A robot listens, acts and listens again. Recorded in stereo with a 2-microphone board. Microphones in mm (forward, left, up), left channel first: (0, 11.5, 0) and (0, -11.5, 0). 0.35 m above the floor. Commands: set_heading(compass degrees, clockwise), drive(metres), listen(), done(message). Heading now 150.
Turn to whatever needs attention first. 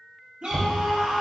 set_heading(210)
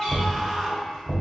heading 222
set_heading(232)
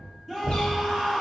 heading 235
done("Found it: a scream, straight ahead, 1 to 2 m away.")